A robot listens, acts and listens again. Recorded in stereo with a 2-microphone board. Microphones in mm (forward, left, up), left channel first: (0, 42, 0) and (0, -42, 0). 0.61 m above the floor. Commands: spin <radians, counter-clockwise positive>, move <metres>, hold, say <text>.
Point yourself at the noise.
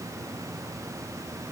hold
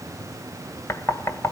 spin 0.61
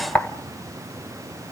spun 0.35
spin 0.35
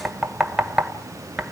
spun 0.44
say Facing the knocking, 1 to 2 m away.